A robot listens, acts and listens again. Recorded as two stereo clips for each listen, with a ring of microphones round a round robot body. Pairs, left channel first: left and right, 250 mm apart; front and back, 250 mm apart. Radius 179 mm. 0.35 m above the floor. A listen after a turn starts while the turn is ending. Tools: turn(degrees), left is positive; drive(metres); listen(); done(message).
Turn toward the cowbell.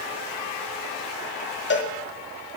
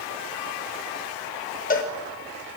turn(degrees=50)
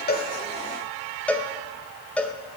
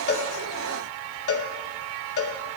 done("Found it: a cowbell, straight ahead.")